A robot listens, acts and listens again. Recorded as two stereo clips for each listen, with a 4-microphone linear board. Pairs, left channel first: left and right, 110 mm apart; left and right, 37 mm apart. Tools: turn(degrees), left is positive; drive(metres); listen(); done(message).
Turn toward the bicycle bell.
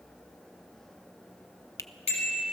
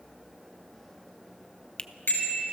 turn(degrees=75)
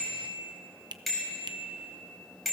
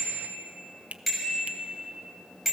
done("Facing the bicycle bell, over 4 m away.")